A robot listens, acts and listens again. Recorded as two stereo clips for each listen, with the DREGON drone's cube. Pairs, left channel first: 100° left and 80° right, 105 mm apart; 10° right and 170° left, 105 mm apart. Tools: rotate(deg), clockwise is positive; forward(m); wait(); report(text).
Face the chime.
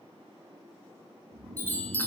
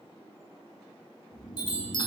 rotate(-25)
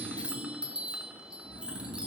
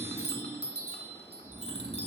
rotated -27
report("Found it: a chime, straight ahead.")